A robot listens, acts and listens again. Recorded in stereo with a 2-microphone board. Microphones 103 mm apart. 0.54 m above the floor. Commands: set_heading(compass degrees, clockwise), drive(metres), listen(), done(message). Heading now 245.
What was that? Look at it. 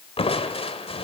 set_heading(175)
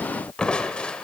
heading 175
set_heading(165)
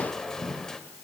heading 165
done("Found it: crushing, straight ahead, 1 to 2 m away.")